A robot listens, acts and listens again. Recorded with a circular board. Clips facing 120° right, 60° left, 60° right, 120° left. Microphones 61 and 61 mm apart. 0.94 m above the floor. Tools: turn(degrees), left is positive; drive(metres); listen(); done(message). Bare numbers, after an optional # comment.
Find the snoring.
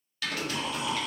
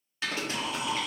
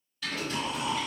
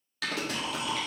# The snoring: 15° right.
turn(-15)
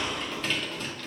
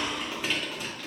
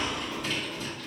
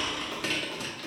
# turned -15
done("Found it: snoring, straight ahead.")